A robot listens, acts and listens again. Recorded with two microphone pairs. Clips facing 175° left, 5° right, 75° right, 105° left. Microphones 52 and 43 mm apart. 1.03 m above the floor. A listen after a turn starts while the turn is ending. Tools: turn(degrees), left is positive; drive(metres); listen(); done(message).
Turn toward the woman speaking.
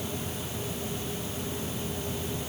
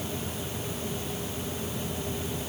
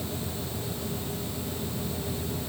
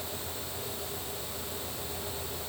listen()
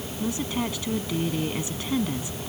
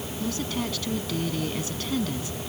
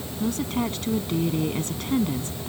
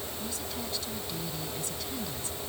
turn(degrees=-115)
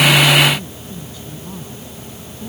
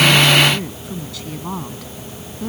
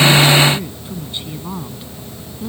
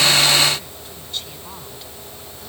done("Found it: a woman speaking, straight ahead.")